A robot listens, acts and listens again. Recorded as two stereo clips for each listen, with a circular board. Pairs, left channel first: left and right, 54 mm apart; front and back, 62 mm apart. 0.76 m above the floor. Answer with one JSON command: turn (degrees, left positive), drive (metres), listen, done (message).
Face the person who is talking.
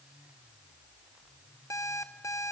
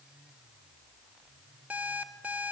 {"listen": true}
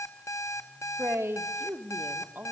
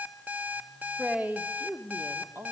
{"turn": -130}
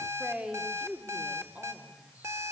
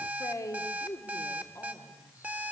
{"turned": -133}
{"turn": -25}
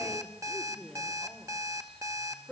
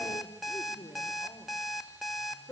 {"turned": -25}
{"done": "Facing the man speaking, 2 to 4 m away."}